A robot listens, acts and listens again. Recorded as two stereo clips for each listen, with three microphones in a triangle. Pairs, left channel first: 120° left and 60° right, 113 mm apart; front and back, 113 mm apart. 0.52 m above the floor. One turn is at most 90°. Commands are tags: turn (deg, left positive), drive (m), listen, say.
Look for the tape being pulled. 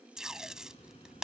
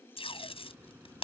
<turn deg="25"/>
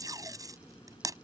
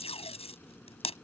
<say>Found it: tape being pulled, straight ahead.</say>